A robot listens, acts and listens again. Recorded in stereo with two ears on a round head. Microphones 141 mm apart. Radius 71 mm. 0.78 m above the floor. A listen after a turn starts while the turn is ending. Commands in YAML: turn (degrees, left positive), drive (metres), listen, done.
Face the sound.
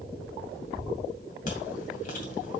turn: 55
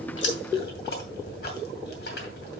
turn: 70
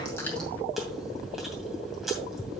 done: "Found it: chewing, straight ahead, 2 to 4 m away."